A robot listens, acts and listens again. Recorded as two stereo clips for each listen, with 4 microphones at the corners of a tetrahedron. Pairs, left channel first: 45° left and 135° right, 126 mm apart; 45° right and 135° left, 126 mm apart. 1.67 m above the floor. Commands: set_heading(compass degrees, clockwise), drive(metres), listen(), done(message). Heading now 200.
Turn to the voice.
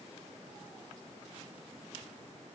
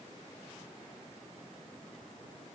listen()
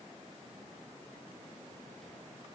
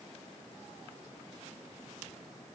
listen()
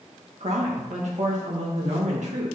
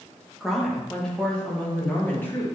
set_heading(320)
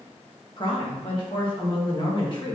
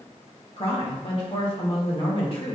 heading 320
done("Facing the woman speaking, 1 to 2 m away.")